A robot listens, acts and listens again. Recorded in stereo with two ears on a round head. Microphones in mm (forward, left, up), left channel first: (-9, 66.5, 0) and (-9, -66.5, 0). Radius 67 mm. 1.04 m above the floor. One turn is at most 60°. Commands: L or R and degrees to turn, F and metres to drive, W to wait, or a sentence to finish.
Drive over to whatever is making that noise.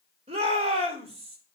R40
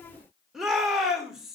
F1.0
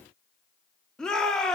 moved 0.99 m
F1.0
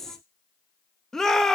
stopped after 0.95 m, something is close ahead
I am next to the shout.